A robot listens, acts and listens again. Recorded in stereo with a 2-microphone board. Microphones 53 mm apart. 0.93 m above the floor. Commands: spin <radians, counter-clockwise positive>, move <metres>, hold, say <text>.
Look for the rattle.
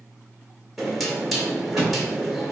spin -0.52
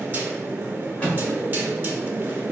spin 0.44
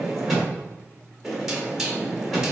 say Found it: a rattle, straight ahead.